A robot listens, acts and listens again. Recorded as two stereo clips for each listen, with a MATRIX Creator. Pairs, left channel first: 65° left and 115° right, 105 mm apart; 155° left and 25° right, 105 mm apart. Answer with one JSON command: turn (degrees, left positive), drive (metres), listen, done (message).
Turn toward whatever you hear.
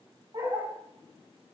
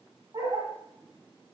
{"turn": -65}
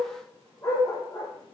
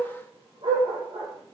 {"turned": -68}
{"turn": 10}
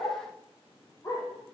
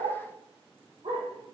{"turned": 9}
{"done": "Facing the dog barking, over 4 m away."}